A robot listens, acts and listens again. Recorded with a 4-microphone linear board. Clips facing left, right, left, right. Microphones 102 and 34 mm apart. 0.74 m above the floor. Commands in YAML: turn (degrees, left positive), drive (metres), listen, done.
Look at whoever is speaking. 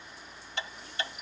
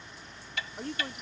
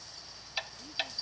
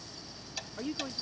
turn: -65
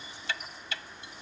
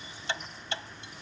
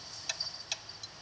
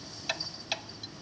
listen: true
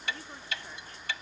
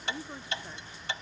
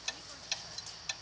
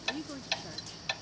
turn: -15
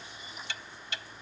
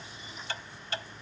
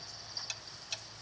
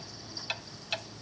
listen: true
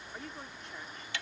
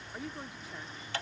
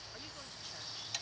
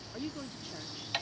done: "Facing the woman speaking."